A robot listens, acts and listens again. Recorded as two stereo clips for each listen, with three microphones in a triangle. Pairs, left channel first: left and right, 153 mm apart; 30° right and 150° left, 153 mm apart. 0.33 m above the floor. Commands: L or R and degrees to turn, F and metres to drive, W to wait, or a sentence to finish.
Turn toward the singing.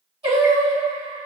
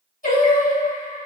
R45
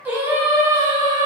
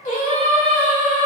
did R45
R30
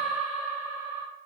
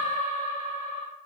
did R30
R15
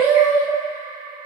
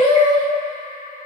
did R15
R25
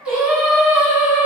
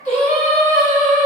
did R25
R15
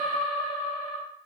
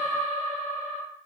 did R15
Found it: singing, straight ahead, 1 to 2 m away.